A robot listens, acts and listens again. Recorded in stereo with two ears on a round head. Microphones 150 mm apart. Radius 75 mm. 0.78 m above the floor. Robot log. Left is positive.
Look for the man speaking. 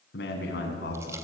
note: The man speaking: about 65° left or 115° left.
cmd yaw +65
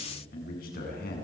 note: So it is at 60° left.
cmd yaw +60
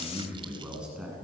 end: Facing the man speaking, over 4 m away.